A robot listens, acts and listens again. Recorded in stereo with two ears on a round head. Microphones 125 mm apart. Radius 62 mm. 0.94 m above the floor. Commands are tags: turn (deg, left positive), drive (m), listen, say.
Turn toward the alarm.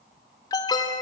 <turn deg="30"/>
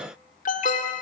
<turn deg="120"/>
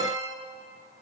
<turn deg="-25"/>
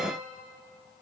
<listen/>
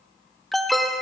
<say>Facing the alarm, 1 to 2 m away.</say>